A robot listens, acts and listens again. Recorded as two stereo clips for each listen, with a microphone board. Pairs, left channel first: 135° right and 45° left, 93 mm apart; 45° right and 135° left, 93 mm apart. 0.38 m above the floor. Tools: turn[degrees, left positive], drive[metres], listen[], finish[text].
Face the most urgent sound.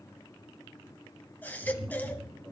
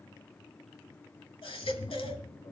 Thought: The baby crying: 65° right.
Action: turn[-65]
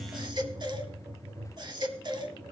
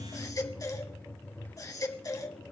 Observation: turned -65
Thought: The baby crying is now 10° left.
Action: turn[10]
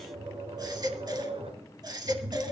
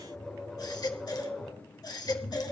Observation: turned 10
Action: finish[Found it: a baby crying, straight ahead, 1 to 2 m away.]